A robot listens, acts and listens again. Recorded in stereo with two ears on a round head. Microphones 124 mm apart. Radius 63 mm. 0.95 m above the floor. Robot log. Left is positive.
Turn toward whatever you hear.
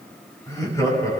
note: The laughter: about 25° left or 155° left.
cmd yaw +25
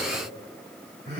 note: So it is at 130° left.
cmd yaw +130
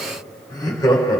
note: The laughter is now 30° left.
cmd yaw +30
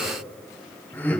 note: The laughter is now 15° left.
cmd yaw +15
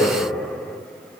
end: Facing the laughter, 2 to 4 m away.